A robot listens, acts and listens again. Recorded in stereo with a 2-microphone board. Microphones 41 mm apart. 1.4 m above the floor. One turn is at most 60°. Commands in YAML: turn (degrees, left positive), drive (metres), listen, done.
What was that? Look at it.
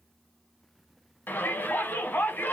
turn: 50
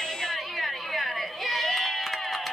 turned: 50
done: "Found it: a shout, straight ahead."